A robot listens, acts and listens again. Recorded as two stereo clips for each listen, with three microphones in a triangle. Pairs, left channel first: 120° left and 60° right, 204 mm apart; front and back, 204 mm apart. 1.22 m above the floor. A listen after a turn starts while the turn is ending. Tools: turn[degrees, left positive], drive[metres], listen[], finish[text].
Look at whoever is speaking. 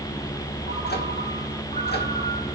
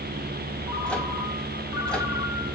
Action: listen[]
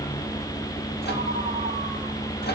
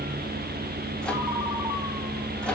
Action: listen[]
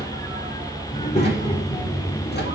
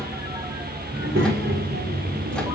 Thought: The child speaking: straight behind.
Action: turn[180]
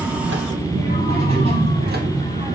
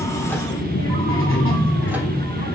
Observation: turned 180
Action: finish[Found it: a child speaking, straight ahead.]